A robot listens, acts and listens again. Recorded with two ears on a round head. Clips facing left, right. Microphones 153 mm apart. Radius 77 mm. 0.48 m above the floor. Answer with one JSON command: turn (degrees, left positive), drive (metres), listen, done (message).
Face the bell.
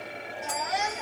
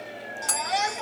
{"turn": -90}
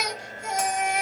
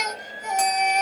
{"listen": true}
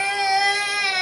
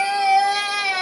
{"listen": true}
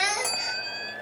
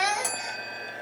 {"done": "Facing the bell, 1 to 2 m away."}